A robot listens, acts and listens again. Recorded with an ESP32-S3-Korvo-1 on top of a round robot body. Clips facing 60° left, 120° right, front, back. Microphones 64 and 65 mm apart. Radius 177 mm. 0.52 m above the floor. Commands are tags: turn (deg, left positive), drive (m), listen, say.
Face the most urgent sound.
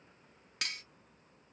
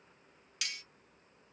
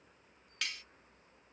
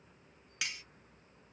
<listen/>
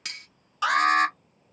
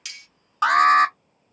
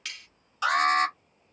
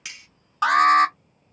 <turn deg="-155"/>
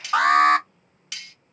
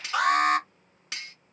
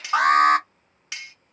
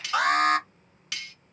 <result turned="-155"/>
<turn deg="40"/>
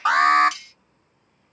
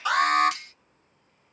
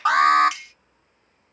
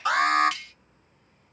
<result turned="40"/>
<turn deg="25"/>
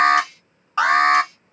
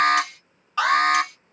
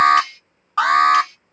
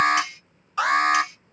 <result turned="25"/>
<say>Found it: an alarm, straight ahead.</say>